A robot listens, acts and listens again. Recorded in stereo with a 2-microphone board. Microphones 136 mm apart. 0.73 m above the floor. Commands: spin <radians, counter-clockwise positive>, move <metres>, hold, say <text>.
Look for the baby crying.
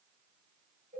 hold
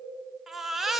spin 0.52
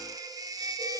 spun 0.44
spin -0.44
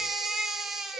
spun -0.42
say Found it: a baby crying, straight ahead, 1 to 2 m away.